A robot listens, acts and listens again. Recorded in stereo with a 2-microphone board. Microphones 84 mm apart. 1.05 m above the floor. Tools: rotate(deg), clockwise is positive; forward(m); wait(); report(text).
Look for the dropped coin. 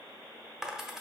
rotate(30)
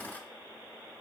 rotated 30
wait()
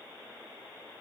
report("I heard a dropped coin, but can't make it out now. It was about 25° left or 145° right.")